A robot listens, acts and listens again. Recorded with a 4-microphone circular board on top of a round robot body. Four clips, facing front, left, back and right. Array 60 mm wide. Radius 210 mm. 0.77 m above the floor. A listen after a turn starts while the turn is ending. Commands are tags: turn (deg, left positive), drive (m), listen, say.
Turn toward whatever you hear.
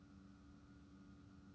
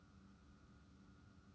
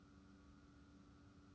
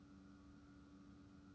<listen/>
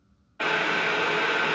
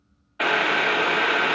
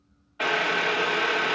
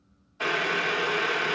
<turn deg="95"/>
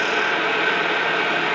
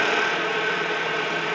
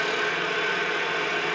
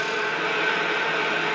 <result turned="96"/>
<say>Facing the boiling.</say>